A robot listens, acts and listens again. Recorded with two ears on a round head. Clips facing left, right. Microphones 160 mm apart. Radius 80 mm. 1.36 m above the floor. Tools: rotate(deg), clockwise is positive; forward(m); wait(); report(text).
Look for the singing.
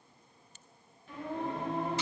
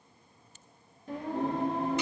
rotate(35)
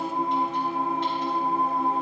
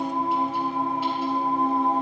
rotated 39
report("Found it: singing, straight ahead.")